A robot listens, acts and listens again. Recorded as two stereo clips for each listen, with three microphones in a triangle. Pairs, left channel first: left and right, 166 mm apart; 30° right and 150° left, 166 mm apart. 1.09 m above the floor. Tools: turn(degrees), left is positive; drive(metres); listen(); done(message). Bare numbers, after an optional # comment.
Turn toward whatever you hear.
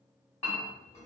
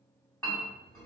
# The clink: 45° left.
turn(45)
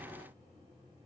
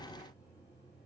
listen()
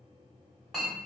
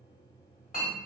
done("Facing the clink.")